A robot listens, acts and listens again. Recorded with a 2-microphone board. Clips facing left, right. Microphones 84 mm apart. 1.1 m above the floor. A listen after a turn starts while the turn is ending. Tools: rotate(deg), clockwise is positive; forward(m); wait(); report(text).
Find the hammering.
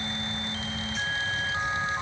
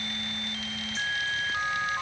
wait()
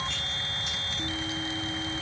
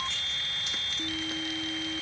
wait()
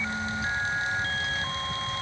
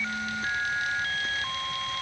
report("I can't make out hammering.")